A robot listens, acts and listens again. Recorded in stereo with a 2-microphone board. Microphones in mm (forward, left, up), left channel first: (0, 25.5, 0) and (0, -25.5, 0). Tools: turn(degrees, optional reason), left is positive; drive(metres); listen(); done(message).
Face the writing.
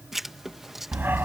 turn(degrees=-30)
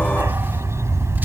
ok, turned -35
listen()
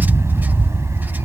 listen()
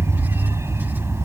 done("I heard writing, but can't make it out now. It was about 30° left or 140° right.")